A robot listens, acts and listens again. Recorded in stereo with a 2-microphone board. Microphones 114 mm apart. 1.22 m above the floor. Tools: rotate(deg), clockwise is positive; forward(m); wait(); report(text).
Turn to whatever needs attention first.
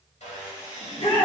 rotate(-55)
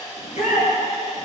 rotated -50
rotate(-75)
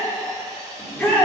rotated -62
rotate(-15)
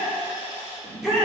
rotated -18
report("Facing the shout, 2 to 4 m away.")